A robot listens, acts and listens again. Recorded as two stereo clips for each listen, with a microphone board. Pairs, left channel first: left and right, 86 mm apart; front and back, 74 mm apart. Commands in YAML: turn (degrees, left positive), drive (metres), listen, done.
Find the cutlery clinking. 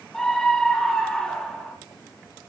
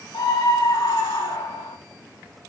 listen: true
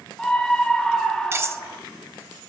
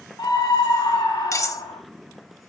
turn: -35
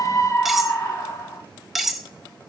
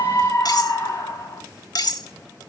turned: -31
done: "Facing the cutlery clinking, under 1 m away."